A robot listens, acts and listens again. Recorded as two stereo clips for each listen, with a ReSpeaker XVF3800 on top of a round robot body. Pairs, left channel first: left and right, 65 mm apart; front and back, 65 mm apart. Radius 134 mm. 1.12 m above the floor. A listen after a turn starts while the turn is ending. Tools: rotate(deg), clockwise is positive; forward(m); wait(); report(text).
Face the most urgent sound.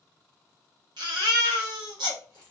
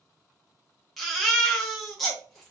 rotate(90)
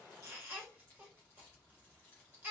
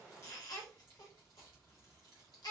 rotate(25)
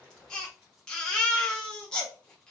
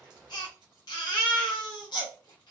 rotate(-10)
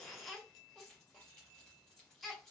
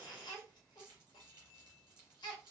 report("Found it: a baby crying, straight ahead.")